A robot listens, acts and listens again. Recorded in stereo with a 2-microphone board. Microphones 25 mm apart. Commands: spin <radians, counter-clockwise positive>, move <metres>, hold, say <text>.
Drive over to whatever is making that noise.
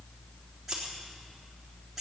spin -0.52
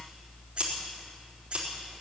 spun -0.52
spin -2.44
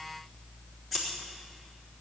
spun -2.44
move 1.0
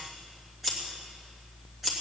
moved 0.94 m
move 1.0
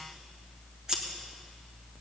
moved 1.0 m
spin -0.35
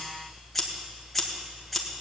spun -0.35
move 1.0
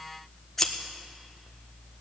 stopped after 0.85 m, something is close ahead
spin 0.17
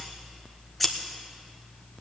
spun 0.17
say I am next to the scissors.